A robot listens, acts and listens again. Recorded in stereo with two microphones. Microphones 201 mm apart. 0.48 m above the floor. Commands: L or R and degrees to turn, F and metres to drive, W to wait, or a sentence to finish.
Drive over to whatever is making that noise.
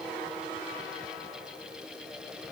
W
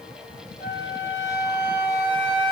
L55
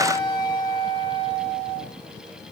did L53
L60
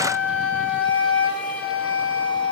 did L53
F1.0
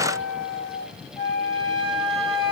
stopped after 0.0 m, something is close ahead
Blocked. The flute is further on, straight ahead.